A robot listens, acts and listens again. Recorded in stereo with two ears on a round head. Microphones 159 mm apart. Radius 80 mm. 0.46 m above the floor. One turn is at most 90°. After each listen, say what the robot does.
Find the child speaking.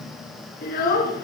Turn 55° left.
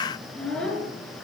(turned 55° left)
Found it: a child speaking, straight ahead, over 4 m away.